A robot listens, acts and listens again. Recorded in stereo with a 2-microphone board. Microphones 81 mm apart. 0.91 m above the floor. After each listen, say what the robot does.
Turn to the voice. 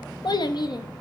Turn 55° left.
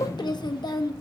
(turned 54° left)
Turn 65° left.
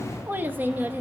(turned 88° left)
Turn 25° right.
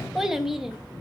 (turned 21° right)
Facing the child speaking.